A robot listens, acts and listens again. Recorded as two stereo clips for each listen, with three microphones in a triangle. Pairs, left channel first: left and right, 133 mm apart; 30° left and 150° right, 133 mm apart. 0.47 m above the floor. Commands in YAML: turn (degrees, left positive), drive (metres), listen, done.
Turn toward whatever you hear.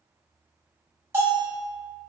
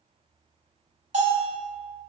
turn: -165
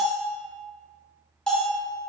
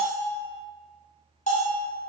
done: "Facing the bell, 1 to 2 m away."